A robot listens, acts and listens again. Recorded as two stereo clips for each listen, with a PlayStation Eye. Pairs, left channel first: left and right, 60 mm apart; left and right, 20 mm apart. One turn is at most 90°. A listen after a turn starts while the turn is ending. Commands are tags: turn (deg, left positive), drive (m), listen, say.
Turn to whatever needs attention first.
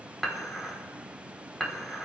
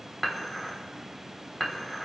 <listen/>
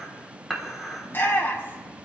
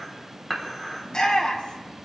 <turn deg="40"/>
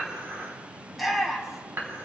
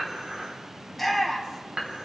<say>Facing the shout, 2 to 4 m away.</say>